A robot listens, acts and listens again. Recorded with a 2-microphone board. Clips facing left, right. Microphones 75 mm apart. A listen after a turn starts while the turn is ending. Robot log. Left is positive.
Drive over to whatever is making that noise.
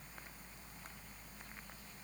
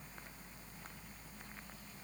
cmd idle
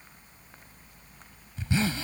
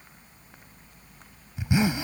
note: The zipper: about 15° right or 165° right.
cmd yaw -15
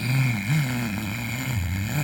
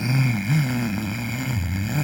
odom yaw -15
cmd fwd 1.0
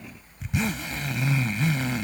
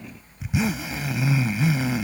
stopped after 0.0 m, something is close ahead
end: Blocked. The zipper is further on, straight ahead.